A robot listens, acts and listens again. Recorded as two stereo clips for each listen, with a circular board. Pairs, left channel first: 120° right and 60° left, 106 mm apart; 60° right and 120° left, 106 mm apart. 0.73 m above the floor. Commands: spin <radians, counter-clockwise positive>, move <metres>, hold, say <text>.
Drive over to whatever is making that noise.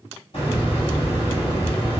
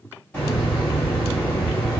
spin -2.36
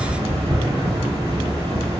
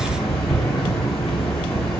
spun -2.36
spin 0.44
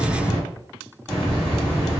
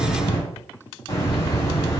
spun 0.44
spin -0.26
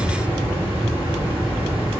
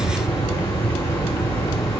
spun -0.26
move 1.0
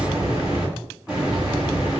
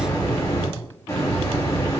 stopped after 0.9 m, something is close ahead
spin -0.26
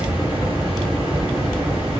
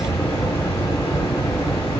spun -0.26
say I am next to the hiss.